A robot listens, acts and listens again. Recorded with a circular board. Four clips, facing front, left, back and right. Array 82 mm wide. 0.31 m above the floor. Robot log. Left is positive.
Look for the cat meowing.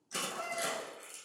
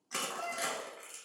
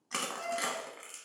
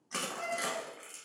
note: The cat meowing: 70° right.
cmd yaw -70
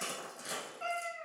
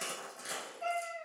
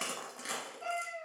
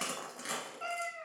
note: The cat meowing is now 65° right.
cmd yaw -65
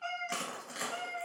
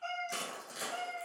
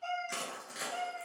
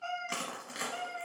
note: The cat meowing is now 35° right.
cmd yaw -35
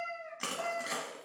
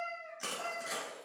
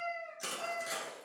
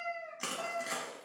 note: The cat meowing is now 10° right.
cmd yaw -10
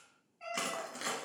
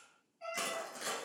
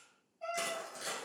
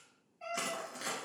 note: The cat meowing is now 10° right.
cmd yaw -10
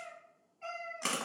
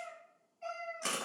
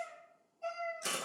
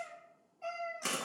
end: Found it: a cat meowing, straight ahead.